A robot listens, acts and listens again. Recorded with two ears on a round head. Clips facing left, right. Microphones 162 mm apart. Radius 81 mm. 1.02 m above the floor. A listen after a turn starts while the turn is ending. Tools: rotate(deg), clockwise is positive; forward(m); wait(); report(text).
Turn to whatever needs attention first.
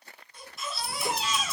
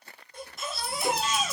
rotate(40)
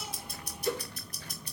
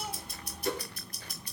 wait()
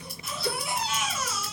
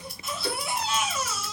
rotate(100)
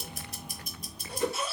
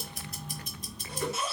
rotate(20)
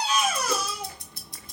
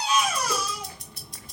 report("Found it: a baby crying, straight ahead, 1 to 2 m away.")